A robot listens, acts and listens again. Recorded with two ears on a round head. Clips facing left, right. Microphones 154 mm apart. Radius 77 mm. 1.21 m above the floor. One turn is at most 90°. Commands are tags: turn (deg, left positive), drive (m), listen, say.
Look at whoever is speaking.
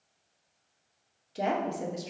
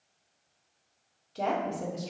<turn deg="15"/>
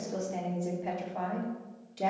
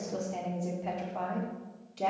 <say>Facing the woman speaking.</say>